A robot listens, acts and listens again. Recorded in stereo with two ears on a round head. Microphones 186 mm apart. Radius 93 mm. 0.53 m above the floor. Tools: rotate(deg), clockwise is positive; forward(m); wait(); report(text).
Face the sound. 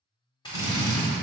rotate(-20)
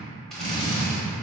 report("Facing the drill.")